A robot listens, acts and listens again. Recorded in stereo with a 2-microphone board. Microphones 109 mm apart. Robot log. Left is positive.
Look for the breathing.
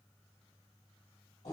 cmd idle
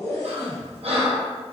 note: The breathing: about 65° right or 115° right.
cmd yaw -65
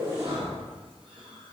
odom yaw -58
cmd idle
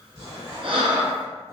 note: So it is at 55° right.
cmd yaw -55
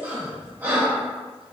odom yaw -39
note: The breathing is now 15° right.
cmd yaw -15
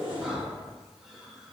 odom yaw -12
cmd idle
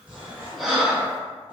end: Facing the breathing, under 1 m away.